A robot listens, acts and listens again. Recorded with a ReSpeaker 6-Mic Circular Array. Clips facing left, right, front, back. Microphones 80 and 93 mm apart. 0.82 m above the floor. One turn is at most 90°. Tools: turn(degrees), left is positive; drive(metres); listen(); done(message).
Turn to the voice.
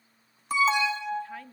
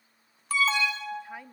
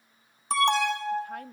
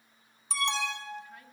turn(degrees=-15)
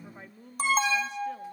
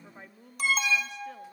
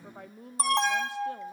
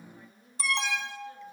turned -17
done("Found it: a woman speaking, straight ahead, 1 to 2 m away.")